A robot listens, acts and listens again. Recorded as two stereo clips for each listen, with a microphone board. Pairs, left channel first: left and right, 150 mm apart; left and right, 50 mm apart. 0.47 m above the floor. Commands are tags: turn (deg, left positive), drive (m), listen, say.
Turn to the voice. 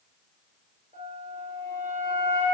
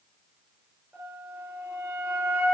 <listen/>
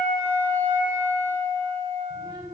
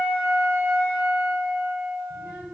<turn deg="-25"/>
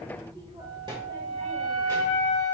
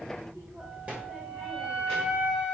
<turn deg="-35"/>
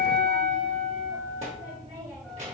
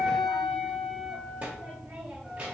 <turn deg="-135"/>
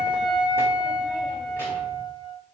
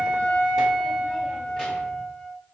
<listen/>
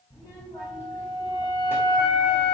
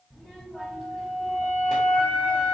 <turn deg="20"/>
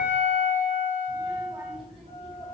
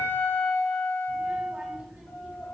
<say>Facing the child speaking.</say>